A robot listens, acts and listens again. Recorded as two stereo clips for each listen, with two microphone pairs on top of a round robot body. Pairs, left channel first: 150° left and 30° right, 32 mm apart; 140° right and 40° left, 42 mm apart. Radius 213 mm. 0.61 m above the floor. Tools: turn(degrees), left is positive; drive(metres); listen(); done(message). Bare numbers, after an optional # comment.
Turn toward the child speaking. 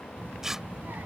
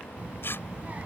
# The child speaking: 15° right.
turn(-15)
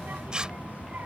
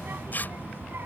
done("Facing the child speaking.")